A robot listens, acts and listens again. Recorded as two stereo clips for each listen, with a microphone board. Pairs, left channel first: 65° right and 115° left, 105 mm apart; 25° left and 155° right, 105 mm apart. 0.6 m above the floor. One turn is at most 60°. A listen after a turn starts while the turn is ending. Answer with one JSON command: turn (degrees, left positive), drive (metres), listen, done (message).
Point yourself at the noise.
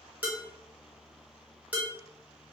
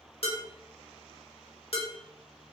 {"turn": 40}
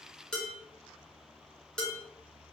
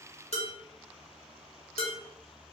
{"turn": 15}
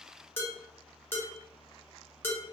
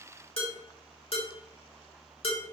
{"done": "Facing the dishes clattering."}